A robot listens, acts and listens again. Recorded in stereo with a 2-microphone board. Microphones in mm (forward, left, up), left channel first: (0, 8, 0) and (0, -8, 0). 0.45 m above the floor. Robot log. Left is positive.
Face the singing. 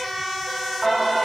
cmd yaw -30
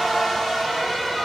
note: So it is at 10° left.
cmd yaw +10
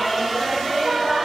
note: The singing is now 10° right.
cmd yaw -10
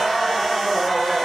note: The singing is now 15° right.
cmd yaw -15
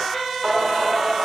note: The singing is now 20° right.
cmd yaw -20
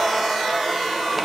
end: Facing the singing, 1 to 2 m away.